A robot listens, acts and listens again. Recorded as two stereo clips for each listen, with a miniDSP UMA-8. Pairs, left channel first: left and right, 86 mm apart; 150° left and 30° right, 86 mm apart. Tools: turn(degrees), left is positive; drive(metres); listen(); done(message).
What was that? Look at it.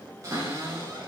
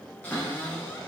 turn(degrees=-140)
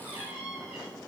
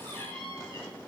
turn(degrees=-15)
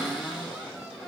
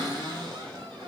done("Found it: a cupboard door, straight ahead.")